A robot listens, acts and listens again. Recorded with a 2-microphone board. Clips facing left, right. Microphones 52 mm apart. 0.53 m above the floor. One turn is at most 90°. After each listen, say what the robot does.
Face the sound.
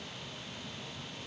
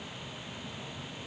Keep listening.
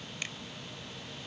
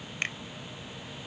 Turn 50° right.
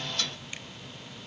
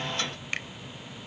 Turn 75° right.
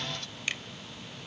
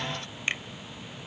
Turn 30° right.
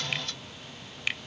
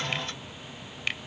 Facing the finger snap.